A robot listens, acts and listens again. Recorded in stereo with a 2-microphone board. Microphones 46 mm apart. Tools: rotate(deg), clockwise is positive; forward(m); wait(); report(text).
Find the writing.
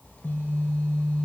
wait()
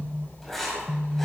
rotate(-30)
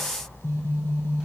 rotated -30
wait()
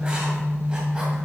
wait()
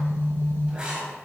rotate(25)
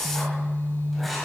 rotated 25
report("Facing the writing, 2 to 4 m away.")